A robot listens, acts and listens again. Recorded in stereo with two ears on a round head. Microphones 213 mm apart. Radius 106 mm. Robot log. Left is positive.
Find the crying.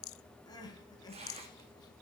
note: The crying: about 15° left or 165° left.
cmd yaw +15
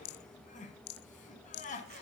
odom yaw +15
note: So it is at 150° left.
cmd yaw +150
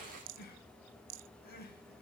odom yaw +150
note: The crying is now 45° left.
cmd yaw +45
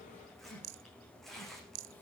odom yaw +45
cmd idle
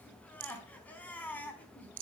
end: Facing the crying, over 4 m away.